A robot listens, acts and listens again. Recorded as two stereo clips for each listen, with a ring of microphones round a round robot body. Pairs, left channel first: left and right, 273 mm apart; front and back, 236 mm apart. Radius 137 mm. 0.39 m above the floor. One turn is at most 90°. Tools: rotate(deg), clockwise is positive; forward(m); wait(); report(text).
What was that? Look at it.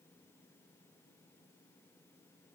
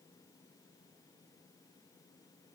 wait()
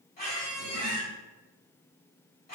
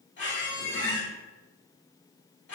rotate(-35)
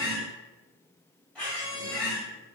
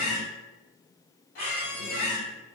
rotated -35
report("Found it: a squeak, straight ahead.")